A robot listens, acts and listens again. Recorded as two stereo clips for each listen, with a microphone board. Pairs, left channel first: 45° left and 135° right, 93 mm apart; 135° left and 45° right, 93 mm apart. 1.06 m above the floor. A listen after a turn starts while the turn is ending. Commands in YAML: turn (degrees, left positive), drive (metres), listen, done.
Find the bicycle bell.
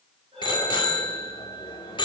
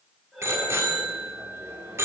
turn: 15
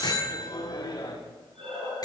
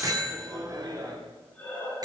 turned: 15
done: "Found it: a bicycle bell, straight ahead."